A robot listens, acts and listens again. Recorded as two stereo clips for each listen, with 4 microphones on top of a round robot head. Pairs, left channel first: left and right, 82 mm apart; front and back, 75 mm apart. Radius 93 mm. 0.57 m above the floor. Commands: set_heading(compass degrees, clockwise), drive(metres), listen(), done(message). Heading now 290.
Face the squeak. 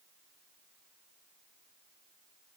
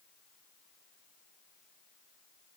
listen()
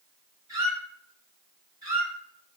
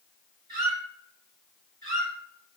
set_heading(70)
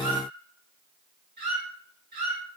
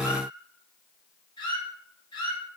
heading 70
set_heading(120)
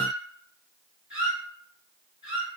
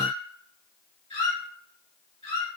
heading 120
set_heading(130)
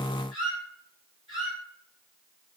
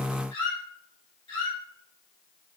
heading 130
done("Found it: a squeak, straight ahead.")